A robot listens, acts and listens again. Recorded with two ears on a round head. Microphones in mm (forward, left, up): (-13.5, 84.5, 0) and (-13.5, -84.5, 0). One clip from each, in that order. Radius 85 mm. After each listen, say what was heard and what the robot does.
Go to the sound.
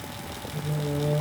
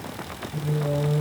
The singing: about 60° right or 120° right. Turn 60° right.
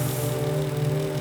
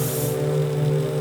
So it is at 65° right. Turn 65° right.
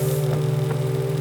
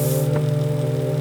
Drive 1.0 m forward.
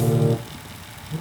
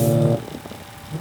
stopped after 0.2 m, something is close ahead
Something is in my way. I am facing the singing but have not reached it.